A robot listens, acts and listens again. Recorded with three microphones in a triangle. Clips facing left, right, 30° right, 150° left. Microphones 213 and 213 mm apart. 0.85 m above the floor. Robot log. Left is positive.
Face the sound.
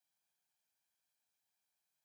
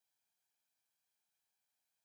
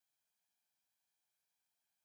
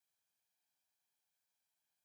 cmd idle
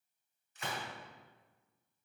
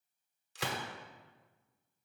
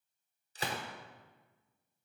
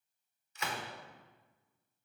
note: The gunshot: 90° right.
cmd yaw -90
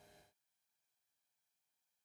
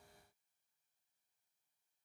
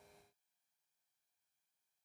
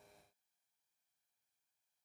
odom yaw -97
note: Nothing new. It was at 10° left.
cmd yaw +10
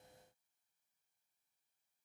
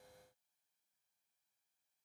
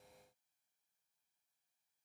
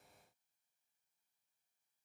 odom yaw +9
end: Facing where the gunshot came from. I can't hear it now.